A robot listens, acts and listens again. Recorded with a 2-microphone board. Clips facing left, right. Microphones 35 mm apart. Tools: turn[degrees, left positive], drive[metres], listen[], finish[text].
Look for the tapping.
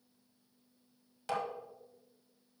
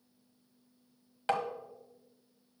Thought: The tapping: about 40° right or 140° right.
Action: turn[-40]
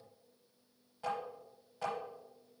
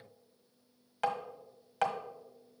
Thought: So it is at 100° right.
Action: turn[-100]
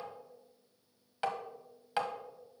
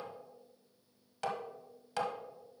Thought: The tapping is now 25° left.
Action: turn[25]
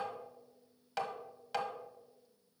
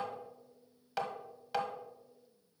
Action: finish[Facing the tapping, 1 to 2 m away.]